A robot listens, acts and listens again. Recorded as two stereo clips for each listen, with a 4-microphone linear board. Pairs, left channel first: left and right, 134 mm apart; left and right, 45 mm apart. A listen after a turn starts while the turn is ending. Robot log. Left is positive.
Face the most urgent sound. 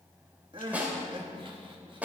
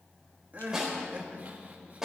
note: The crying: about 40° right or 140° right.
cmd yaw -40
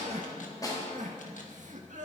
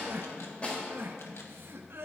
note: So it is at 100° right.
cmd yaw -100
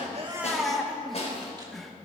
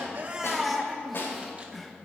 end: Facing the crying.